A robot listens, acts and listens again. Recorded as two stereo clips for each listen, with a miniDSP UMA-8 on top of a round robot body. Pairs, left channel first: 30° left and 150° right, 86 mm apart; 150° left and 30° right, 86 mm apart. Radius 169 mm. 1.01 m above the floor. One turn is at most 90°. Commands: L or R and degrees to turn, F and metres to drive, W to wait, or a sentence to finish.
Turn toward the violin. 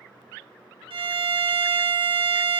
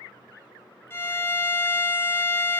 R90
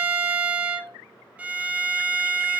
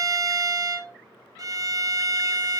R75
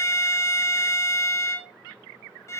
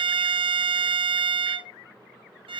R25
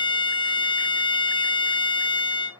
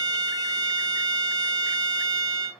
L10
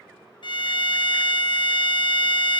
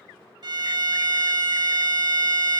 Found it: a violin, straight ahead, 1 to 2 m away.